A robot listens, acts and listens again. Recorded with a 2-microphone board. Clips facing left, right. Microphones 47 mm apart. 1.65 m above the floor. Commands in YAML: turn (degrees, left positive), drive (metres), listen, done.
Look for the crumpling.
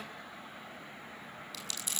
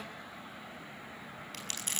turn: -50
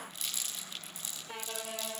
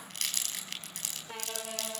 turn: -80
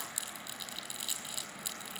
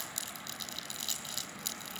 turn: 15
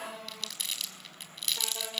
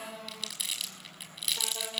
done: "Facing the crumpling, over 4 m away."